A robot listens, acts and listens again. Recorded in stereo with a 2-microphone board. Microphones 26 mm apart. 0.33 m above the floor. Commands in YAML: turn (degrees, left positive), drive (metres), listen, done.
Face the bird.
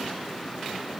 listen: true
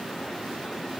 listen: true
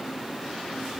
done: "I can't make out a bird to turn to."